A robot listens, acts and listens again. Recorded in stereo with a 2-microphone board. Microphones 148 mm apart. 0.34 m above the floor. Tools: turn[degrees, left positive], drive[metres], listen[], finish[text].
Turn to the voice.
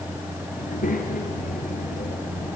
Thought: The child speaking: about 70° left or 110° left.
Action: turn[70]
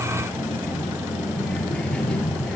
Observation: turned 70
Action: finish[Facing the child speaking.]